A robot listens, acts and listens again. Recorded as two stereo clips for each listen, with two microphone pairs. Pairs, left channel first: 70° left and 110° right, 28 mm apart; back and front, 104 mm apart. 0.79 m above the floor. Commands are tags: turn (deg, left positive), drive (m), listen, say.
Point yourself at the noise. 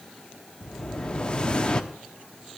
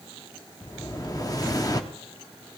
<turn deg="125"/>
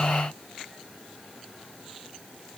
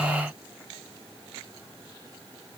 <say>I heard an explosion from this way, but can't make it out now.</say>